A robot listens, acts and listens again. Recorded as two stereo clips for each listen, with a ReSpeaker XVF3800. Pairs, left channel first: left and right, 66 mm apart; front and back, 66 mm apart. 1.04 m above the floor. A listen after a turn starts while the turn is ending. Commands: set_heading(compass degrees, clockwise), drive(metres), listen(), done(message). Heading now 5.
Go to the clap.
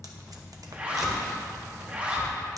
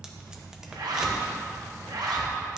listen()
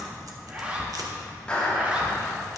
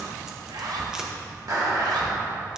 set_heading(205)
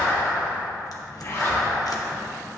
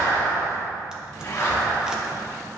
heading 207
drive(1.0)
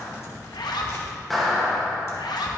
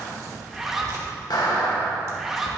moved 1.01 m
drive(1.0)
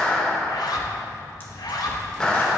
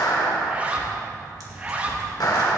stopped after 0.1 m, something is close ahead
set_heading(192)
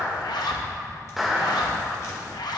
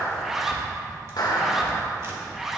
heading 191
done("Arrived at the clap, straight ahead.")